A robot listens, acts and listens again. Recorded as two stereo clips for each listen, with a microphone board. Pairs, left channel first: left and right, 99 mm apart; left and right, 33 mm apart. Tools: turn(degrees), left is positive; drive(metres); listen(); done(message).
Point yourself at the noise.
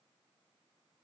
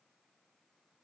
listen()
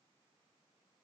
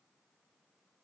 listen()
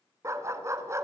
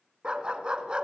turn(degrees=-30)
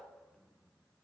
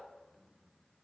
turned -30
listen()
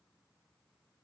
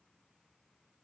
listen()
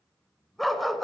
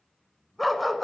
done("Facing the dog barking.")